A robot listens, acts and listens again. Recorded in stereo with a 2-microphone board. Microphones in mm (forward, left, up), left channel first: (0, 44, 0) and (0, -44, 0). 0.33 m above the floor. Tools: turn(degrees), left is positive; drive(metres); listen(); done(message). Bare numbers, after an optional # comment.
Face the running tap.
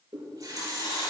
# The running tap: about 40° right or 140° right.
turn(-40)
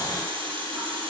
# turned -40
# So it is at 100° right.
turn(-100)
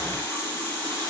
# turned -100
# The running tap is now 30° left.
turn(30)
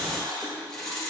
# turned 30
# The running tap is now 10° left.
turn(10)
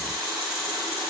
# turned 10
done("Facing the running tap.")